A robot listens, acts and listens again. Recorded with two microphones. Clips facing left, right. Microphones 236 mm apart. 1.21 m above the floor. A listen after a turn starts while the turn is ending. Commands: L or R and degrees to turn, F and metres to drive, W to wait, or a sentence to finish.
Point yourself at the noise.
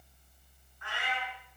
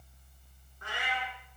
R40
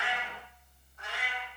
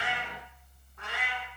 R115
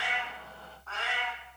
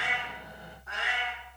R20
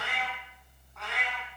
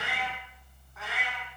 Found it: a cat meowing, straight ahead.